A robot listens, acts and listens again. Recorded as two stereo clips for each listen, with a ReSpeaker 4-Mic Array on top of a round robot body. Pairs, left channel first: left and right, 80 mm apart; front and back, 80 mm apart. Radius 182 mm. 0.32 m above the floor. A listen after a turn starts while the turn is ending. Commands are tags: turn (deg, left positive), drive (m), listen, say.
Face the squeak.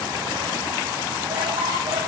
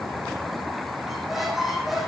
<listen/>
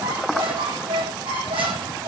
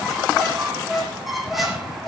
<turn deg="-90"/>
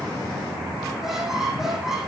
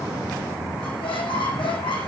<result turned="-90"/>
<say>Found it: a squeak, straight ahead, 2 to 4 m away.</say>